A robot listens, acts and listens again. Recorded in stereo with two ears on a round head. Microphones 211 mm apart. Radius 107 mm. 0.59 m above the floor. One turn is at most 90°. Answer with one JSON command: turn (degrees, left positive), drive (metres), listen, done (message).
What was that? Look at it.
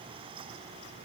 {"listen": true}
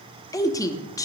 {"turn": 30}
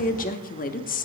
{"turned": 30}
{"turn": 90}
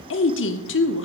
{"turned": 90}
{"turn": 70}
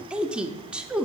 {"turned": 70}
{"done": "Found it: a woman speaking, straight ahead, 1 to 2 m away."}